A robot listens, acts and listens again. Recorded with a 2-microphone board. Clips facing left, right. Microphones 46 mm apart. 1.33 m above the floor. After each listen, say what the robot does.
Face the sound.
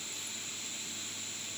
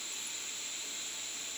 Keep listening.
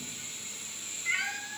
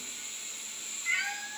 Turn 30° left.
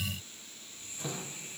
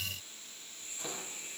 Keep listening.
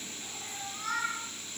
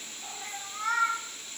Turn 35° right.
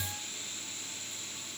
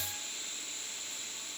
Keep listening.
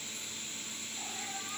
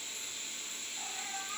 Facing the cat meowing.